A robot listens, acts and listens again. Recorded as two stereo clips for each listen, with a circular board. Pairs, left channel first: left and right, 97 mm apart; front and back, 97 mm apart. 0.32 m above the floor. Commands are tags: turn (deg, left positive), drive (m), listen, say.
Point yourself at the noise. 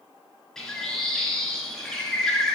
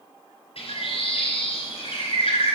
<say>Found it: a bird, straight ahead.</say>